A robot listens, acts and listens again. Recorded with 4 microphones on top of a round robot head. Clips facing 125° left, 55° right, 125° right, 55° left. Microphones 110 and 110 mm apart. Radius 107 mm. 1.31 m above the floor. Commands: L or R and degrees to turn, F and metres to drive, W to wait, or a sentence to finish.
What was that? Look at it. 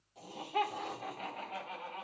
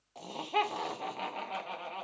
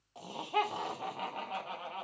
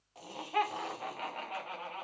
R55
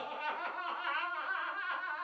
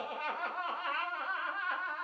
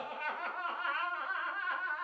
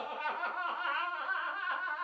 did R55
Facing the laughter, 2 to 4 m away.